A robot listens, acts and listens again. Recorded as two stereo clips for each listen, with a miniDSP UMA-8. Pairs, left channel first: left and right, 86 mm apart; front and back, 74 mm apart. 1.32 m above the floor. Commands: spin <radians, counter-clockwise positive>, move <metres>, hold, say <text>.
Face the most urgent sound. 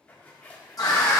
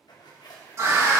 spin 2.27
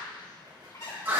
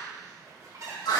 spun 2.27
spin -0.35
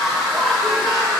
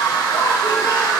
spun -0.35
say Found it: a scream, straight ahead.